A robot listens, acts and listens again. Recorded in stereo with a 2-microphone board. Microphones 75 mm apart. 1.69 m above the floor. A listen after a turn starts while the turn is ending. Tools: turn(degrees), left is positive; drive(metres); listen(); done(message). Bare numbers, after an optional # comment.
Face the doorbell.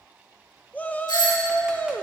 # The doorbell: about 70° left or 110° left.
turn(70)
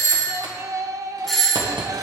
done("Facing the doorbell.")